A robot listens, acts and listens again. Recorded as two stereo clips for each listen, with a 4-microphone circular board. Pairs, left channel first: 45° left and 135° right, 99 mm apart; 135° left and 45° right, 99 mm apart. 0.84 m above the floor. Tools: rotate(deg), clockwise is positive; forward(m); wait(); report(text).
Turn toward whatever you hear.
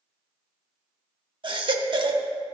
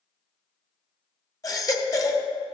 rotate(170)
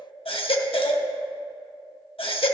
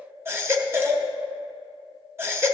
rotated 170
rotate(-20)
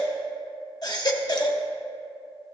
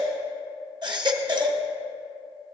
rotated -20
report("Facing the baby crying, under 1 m away.")